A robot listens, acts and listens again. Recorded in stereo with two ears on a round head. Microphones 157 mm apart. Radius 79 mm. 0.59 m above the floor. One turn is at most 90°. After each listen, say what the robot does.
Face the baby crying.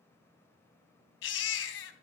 Turn 90° left.
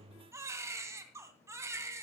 Turn 15° right.
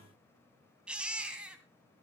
Found it: a baby crying, straight ahead, 2 to 4 m away.